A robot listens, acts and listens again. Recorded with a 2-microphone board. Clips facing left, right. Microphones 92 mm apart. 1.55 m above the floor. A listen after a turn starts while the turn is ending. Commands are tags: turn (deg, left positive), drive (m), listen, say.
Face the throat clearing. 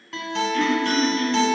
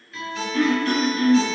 <turn deg="-30"/>
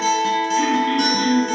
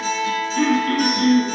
<turn deg="-115"/>
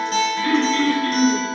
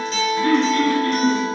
<turn deg="-30"/>
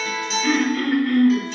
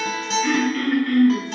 <say>Facing the throat clearing.</say>